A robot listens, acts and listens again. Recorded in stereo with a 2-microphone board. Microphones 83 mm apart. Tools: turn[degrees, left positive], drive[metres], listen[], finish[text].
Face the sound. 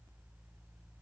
Action: listen[]
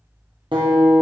Thought: The guitar: about 75° right or 105° right.
Action: turn[-75]
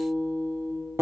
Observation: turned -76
Thought: So it is at 30° right.
Action: turn[-30]
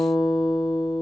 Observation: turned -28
Action: finish[Facing the guitar.]